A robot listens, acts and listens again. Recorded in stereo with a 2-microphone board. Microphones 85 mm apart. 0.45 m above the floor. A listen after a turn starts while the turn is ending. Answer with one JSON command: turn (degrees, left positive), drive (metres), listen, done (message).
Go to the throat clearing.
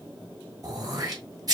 {"turn": -50}
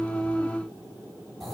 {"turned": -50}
{"drive": 1.0}
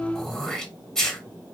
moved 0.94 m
{"drive": 1.0}
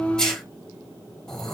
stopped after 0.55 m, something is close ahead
{"turn": 10}
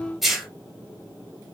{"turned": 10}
{"done": "Arrived at the throat clearing, straight ahead."}